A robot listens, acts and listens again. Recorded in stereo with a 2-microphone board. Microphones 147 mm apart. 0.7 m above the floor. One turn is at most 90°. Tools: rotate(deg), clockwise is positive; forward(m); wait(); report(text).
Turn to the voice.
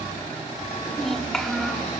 rotate(-30)
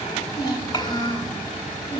rotate(-90)
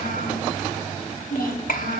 rotate(-90)
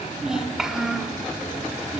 report("Found it: a child speaking, straight ahead.")